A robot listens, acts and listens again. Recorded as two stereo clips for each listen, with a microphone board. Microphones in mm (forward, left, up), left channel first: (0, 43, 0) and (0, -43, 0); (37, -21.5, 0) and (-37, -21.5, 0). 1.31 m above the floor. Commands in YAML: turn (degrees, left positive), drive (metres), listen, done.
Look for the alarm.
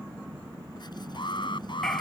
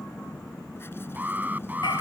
turn: 110
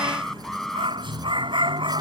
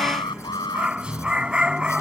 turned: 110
done: "Facing the alarm."